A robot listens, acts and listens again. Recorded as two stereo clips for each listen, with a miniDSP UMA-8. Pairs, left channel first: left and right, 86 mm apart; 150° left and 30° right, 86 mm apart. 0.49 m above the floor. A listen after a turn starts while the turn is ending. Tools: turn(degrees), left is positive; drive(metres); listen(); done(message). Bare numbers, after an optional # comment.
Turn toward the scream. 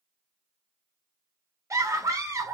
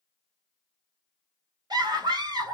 # The scream: 45° right.
turn(-45)
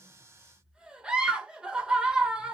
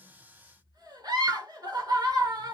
# The scream is now 10° right.
turn(-10)
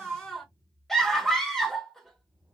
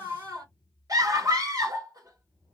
done("Found it: a scream, straight ahead.")